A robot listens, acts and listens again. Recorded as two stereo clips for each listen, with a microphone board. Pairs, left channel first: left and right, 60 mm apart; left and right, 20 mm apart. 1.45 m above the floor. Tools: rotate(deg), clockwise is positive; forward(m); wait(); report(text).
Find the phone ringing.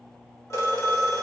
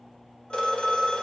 rotate(-55)
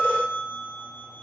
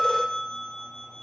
rotate(-55)
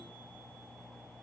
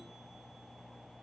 wait()
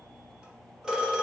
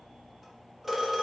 rotate(10)
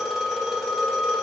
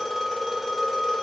report("Found it: a phone ringing, straight ahead, 1 to 2 m away.")